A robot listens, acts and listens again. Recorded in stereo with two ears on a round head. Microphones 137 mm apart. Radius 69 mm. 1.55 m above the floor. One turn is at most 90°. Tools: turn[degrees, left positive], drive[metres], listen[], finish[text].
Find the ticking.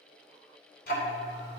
Thought: The ticking: about 65° left or 115° left.
Action: turn[65]
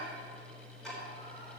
Action: finish[Found it: ticking, straight ahead, 2 to 4 m away.]